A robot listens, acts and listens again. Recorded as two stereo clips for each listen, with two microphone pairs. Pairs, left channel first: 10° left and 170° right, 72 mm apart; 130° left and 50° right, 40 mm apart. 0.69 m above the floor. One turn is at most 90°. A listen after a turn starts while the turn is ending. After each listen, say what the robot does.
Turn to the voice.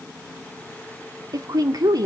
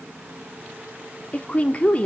Turn 90° right.
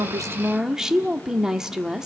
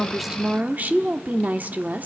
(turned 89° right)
Turn 90° right.
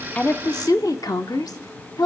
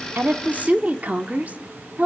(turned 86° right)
Found it: a woman speaking, straight ahead.